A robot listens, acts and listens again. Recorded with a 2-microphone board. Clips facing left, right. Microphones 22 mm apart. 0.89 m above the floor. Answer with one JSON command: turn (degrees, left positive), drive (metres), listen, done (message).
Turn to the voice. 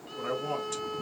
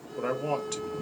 {"turn": -65}
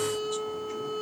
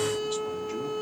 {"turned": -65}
{"listen": true}
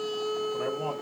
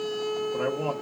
{"turn": -50}
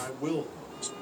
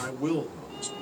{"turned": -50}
{"done": "Facing the man speaking, 1 to 2 m away."}